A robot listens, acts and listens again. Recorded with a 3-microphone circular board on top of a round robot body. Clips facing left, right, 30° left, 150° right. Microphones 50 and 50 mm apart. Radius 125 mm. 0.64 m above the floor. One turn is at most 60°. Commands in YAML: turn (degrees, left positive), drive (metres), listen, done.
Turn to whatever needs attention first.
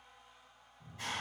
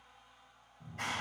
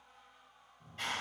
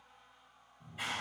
listen: true
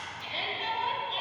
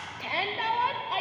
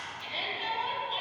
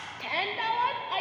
turn: -60
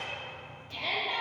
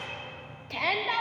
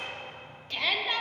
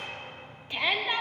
turn: -60
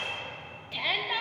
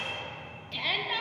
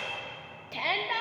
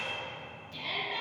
done: "Facing the shout."